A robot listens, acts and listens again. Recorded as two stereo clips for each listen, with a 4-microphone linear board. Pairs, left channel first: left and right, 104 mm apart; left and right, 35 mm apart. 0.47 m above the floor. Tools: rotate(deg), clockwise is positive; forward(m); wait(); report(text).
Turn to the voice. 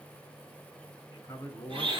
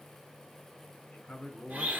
rotate(-30)
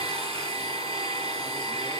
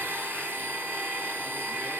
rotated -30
wait()
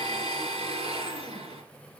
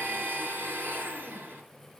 wait()
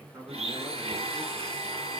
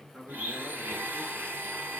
rotate(25)
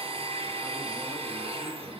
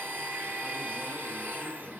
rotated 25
wait()
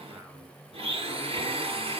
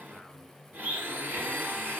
wait()
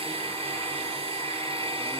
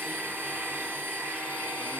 report("I heard a man speaking from this way, but can't make it out now.")